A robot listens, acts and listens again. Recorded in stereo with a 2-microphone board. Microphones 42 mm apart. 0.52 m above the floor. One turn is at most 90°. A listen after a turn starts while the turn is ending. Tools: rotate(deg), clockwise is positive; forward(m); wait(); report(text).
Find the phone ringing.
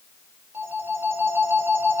rotate(90)
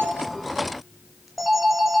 report("Found it: a phone ringing, straight ahead.")